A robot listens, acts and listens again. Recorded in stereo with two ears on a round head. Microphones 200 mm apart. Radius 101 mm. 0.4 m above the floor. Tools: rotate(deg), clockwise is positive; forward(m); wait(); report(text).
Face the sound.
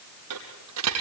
rotate(90)
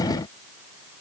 report("I heard a dropped coin from this way, but can't make it out now.")